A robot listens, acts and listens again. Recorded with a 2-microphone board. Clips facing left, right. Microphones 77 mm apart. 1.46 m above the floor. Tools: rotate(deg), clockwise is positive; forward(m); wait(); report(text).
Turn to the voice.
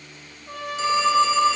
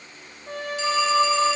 wait()
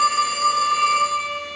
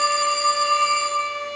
wait()
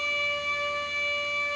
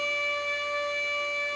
report("I can't make out anyone speaking, only a trumpet and a phone ringing.")